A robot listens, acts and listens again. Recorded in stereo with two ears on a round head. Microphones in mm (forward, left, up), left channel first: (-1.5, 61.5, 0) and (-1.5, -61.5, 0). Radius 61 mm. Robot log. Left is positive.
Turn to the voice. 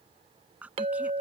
cmd yaw -30
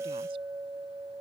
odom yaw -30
cmd idle
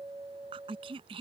note: So it is at 140° right.
cmd yaw -140
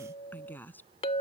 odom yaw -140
note: The woman speaking is now 15° left.
cmd yaw +15
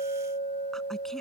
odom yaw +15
cmd idle
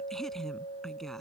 end: Facing the woman speaking.